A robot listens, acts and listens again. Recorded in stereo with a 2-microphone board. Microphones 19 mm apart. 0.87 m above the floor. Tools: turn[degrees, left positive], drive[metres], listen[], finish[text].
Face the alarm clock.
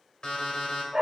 Thought: The alarm clock: about 50° left or 130° left.
Action: turn[50]
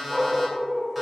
Action: finish[Found it: an alarm clock, straight ahead, 2 to 4 m away.]